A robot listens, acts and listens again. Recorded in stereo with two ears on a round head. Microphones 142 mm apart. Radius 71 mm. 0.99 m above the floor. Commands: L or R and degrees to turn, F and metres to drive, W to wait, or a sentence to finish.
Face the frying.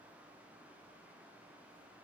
W
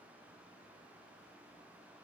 W
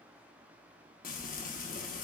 L55
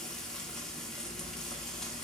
Facing the frying, under 1 m away.